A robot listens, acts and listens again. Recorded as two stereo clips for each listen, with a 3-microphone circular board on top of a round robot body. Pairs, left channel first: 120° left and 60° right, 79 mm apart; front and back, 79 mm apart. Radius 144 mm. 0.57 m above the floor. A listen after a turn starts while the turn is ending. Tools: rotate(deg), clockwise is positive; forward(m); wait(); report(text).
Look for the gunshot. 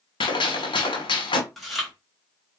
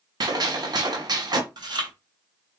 rotate(-140)
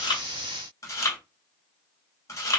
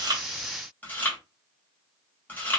report("Facing where the gunshot came from. I can't hear it now.")